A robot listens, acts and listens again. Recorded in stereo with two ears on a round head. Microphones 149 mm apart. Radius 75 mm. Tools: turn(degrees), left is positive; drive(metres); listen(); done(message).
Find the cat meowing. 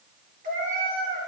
turn(degrees=-55)
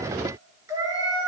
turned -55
turn(degrees=-25)
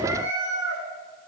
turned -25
turn(degrees=-25)
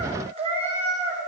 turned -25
turn(degrees=-45)
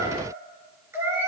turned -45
turn(degrees=-15)
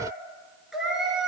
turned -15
done("Facing the cat meowing.")